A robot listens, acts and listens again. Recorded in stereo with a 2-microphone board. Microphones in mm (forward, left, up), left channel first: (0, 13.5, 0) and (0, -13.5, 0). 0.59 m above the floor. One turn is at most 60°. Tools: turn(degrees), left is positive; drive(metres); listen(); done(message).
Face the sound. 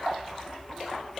listen()
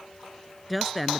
turn(degrees=30)
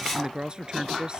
turn(degrees=-30)
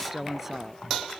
turn(degrees=-10)
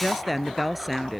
done("Found it: a woman speaking, straight ahead.")